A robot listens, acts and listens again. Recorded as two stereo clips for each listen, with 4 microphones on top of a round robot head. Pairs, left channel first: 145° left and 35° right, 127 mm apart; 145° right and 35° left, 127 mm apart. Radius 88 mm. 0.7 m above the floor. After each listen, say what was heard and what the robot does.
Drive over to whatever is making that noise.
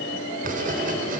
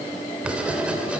The writing: 45° right. Turn 45° right.
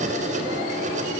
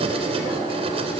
The writing is now 10° right. Turn 10° right.
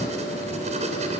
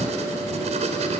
Drive 1.0 m forward.
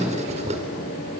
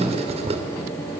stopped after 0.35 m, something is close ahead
Something is in my way. I am facing the writing but have not reached it.